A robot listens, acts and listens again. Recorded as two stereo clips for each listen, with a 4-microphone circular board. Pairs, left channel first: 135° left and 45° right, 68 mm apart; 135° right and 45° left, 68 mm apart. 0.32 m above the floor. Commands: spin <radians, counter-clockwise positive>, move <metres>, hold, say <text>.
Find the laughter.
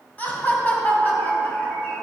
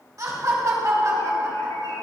spin 1.31
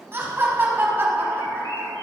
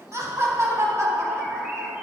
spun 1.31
spin 0.17
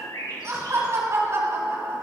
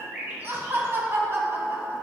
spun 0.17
say Facing the laughter, 2 to 4 m away.